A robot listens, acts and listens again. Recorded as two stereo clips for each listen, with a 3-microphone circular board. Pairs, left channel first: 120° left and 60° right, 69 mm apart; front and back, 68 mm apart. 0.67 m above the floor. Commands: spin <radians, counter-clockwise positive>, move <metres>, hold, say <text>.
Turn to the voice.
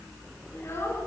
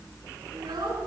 spin 2.97
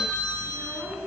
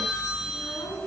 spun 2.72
spin 0.26
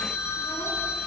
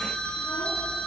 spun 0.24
hold
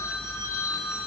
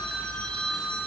hold
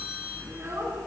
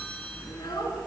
say Facing the child speaking.